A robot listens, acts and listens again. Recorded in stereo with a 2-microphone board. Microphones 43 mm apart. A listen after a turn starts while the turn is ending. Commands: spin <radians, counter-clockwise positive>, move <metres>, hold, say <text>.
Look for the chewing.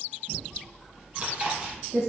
spin -0.44
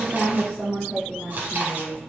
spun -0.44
spin -2.27
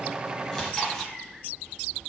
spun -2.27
spin 0.17
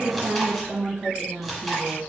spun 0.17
say Facing the chewing.